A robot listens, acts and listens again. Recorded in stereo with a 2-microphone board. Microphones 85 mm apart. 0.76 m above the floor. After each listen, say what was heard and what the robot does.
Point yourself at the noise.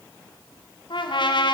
The trumpet: about 70° left or 110° left. Turn 70° left.
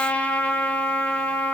So it is at 15° left. Turn 15° left.
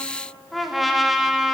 Found it: a trumpet, straight ahead.